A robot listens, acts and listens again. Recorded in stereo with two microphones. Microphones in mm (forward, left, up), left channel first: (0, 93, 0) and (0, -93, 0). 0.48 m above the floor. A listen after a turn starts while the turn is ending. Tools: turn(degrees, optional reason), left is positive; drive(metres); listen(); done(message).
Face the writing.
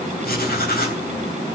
turn(degrees=60, reason="The writing: about 60° left or 120° left.")
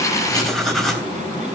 done("Found it: writing, straight ahead, 2 to 4 m away.")